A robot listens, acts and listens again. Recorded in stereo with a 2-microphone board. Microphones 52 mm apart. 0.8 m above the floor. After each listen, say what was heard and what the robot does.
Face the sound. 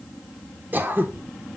The throat clearing: about 40° right or 140° right. Turn 40° right.
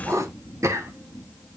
So it is at 100° right. Turn 100° right.
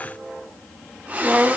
The throat clearing is now 30° right. Turn 30° right.
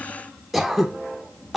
Facing the throat clearing, 1 to 2 m away.